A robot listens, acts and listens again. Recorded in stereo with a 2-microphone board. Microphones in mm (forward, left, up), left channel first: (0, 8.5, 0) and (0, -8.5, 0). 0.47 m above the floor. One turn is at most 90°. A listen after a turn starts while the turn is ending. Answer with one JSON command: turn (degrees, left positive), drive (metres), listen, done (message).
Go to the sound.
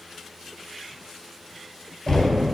{"turn": 35}
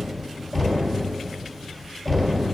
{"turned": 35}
{"drive": 1.0}
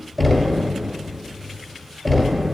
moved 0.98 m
{"turn": 10}
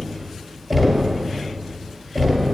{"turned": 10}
{"drive": 1.0}
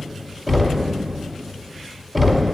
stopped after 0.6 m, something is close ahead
{"done": "Arrived at the knocking, straight ahead."}